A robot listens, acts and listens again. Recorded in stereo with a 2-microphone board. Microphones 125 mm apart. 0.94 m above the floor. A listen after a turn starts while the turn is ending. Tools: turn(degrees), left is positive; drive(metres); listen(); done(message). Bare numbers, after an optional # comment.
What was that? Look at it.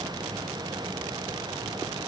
listen()
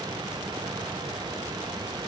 listen()
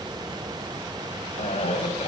# The cough: about 60° left or 120° left.
turn(60)
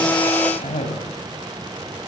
# So it is at 60° left.
turn(60)
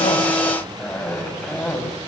# The cough is now 10° left.
turn(10)
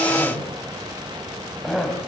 done("Found it: a cough, straight ahead.")